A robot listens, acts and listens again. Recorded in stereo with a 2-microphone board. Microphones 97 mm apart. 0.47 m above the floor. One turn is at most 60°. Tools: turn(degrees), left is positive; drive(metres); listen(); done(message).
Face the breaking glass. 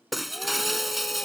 turn(degrees=30)
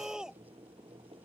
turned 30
listen()
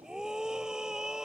done("I heard breaking glass, but can't make it out now. It was about 30° right or 150° left.")